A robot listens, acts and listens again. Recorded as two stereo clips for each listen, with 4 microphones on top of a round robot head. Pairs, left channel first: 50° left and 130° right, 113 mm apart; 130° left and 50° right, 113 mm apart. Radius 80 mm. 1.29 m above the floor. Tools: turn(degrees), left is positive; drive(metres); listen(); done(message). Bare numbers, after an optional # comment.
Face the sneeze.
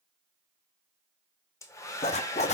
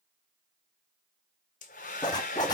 listen()
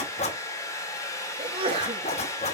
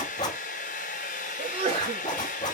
# The sneeze: 85° right.
turn(-85)
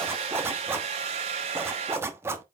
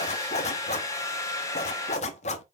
done("Facing where the sneeze came from. I can't hear it now.")